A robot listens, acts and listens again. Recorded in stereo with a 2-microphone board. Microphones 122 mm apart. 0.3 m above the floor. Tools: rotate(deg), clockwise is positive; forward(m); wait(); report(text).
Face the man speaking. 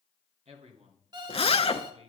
rotate(65)
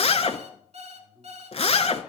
rotate(15)
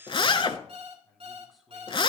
report("Found it: a man speaking, straight ahead, 2 to 4 m away.")